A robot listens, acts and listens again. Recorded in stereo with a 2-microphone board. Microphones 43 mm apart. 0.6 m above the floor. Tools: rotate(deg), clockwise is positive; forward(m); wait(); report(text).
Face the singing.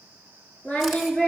rotate(-35)
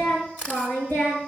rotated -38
rotate(-115)
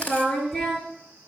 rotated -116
rotate(-10)
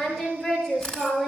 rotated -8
report("Found it: singing, straight ahead.")